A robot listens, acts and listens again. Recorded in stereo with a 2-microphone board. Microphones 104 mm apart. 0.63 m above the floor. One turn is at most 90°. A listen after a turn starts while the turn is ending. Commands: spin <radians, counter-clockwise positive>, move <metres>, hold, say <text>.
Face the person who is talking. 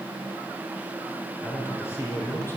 spin 0.35
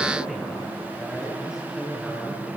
say Facing the man speaking, over 4 m away.